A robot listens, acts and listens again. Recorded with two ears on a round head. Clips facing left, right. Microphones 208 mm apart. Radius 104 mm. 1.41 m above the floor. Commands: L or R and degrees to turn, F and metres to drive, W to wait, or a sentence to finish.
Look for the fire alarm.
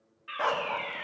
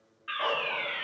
R20
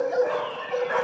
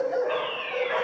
W
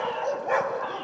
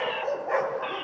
W
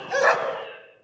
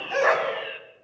R140
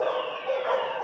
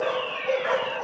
W
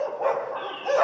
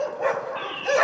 R40
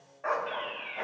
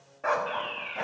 R10
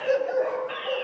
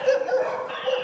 W
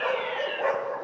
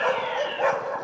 W
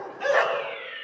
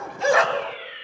Facing the fire alarm, 2 to 4 m away.